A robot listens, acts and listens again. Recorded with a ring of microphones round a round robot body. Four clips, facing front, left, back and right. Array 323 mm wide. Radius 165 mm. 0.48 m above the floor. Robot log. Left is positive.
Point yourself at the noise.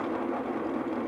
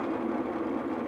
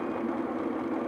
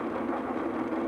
cmd idle
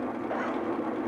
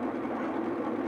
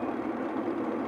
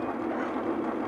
cmd idle
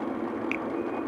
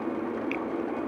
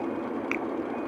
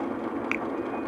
note: The finger snap: 110° right.
cmd yaw -110
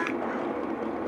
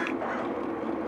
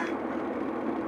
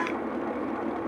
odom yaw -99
note: Nothing new. It was at 10° right.
cmd yaw -10
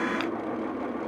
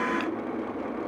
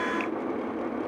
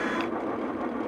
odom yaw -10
cmd idle
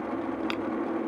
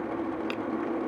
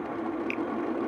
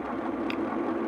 end: Facing the finger snap.